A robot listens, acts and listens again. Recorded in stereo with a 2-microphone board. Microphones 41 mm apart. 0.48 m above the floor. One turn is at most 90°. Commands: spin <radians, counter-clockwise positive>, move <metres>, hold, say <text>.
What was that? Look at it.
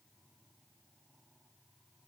hold
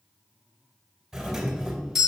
spin -0.52
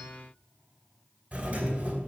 spin -1.57
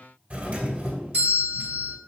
spin -0.87
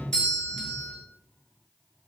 spin 0.35
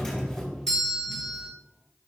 say Found it: a doorbell, straight ahead.